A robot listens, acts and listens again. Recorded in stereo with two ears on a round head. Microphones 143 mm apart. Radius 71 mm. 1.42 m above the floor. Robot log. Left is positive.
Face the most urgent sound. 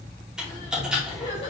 note: The crying: about 40° left or 140° left.
cmd yaw +40
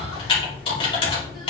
cmd idle
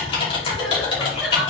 end: Found it: crying, straight ahead, 2 to 4 m away.